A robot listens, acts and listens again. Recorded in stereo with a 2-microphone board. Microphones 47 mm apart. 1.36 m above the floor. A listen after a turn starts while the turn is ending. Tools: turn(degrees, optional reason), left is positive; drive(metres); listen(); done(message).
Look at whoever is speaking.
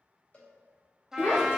turn(degrees=60, reason="The child speaking: about 60° left or 120° left.")
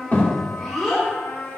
done("Facing the child speaking, 2 to 4 m away.")